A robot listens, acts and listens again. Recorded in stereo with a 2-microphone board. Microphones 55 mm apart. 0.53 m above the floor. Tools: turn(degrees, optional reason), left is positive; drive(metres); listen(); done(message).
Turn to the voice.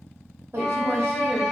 turn(degrees=-45, reason="The woman speaking: about 45° right or 135° right.")
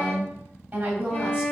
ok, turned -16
turn(degrees=-25, reason="The woman speaking: about 25° right or 155° right.")
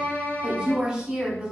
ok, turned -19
done("Found it: a woman speaking, straight ahead.")